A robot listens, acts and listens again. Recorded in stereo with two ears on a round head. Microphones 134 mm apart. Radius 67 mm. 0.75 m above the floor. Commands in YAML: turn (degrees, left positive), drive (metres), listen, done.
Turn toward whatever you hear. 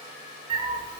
turn: -35
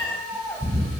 done: "Found it: a cat meowing, straight ahead."